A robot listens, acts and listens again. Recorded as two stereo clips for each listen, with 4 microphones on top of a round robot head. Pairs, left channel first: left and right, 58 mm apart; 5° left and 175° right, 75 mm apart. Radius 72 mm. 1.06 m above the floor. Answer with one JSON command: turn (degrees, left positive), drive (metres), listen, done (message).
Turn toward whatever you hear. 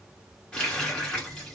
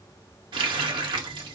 {"turn": 170}
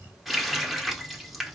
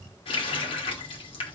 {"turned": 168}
{"done": "Facing the running tap."}